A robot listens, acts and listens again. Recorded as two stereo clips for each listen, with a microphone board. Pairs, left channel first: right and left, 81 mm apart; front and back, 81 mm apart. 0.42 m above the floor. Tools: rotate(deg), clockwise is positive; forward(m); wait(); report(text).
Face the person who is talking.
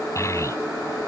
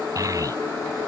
rotate(140)
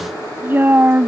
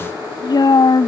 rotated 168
rotate(-30)
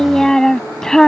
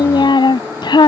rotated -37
rotate(10)
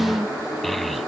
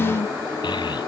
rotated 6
report("Facing the child speaking.")